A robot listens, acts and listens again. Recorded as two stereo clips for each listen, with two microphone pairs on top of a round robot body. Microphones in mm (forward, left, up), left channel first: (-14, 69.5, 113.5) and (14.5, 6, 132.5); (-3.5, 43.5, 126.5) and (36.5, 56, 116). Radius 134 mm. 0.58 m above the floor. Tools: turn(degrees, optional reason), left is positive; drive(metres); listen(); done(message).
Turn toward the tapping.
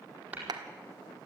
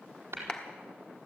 done("Found it: tapping, straight ahead, over 4 m away.")